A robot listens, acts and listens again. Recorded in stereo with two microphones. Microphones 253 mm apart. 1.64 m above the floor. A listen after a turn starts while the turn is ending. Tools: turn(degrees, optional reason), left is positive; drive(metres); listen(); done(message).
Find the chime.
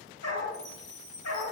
turn(degrees=-30)
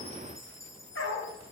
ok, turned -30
turn(degrees=15, reason="So it is at 15° left.")
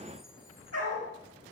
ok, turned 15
listen()
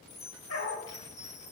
done("Facing the chime, 2 to 4 m away.")